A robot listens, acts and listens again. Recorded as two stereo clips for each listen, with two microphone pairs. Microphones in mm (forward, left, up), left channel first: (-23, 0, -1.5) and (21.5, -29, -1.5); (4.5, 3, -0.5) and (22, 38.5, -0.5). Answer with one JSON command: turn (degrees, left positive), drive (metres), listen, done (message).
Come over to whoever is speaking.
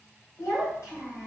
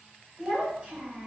{"turn": 145}
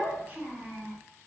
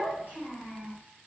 {"turn": 25}
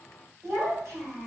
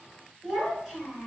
{"turn": -10}
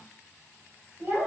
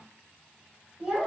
{"drive": 1.0}
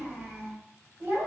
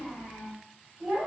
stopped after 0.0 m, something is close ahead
{"done": "Something is in my way. I am facing the child speaking but have not reached it."}